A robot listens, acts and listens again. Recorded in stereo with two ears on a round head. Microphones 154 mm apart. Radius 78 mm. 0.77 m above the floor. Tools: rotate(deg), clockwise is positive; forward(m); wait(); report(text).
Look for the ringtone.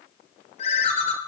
rotate(-45)
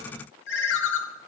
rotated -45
rotate(-95)
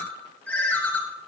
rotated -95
rotate(-10)
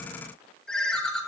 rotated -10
report("Found it: a ringtone, straight ahead.")